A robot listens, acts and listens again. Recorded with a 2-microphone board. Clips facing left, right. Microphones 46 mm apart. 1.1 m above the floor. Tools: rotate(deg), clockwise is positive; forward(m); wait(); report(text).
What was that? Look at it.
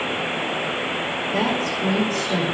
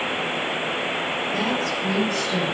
rotate(-60)
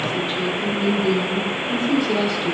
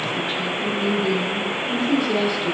report("Found it: a woman speaking, straight ahead.")